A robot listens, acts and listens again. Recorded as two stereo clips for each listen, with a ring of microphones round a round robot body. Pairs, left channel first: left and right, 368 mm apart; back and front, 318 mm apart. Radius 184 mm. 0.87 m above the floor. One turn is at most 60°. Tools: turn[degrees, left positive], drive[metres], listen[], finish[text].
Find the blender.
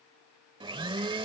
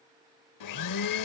Thought: The blender: 165° right.
Action: turn[-60]
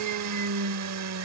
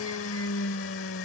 Thought: The blender is now 130° right.
Action: turn[-60]
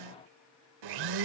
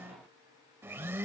Thought: The blender is now 80° right.
Action: turn[-60]
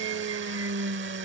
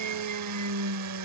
Thought: The blender is now 35° right.
Action: turn[-35]
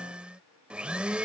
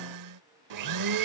Action: finish[Found it: a blender, straight ahead.]